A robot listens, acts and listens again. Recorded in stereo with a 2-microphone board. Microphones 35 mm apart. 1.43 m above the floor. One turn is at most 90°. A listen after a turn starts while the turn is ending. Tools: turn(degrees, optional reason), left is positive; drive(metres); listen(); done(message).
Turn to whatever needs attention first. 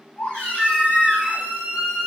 turn(degrees=30, reason="The baby crying: about 30° left or 150° left.")
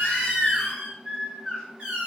done("Facing the baby crying, 1 to 2 m away.")